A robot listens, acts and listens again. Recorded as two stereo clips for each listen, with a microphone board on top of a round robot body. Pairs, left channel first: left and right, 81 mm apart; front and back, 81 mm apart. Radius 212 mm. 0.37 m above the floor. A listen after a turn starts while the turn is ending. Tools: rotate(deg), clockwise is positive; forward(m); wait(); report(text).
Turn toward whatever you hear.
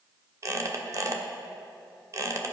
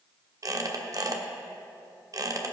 rotate(135)
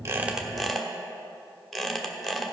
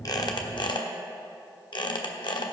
report("Found it: a squeak, straight ahead.")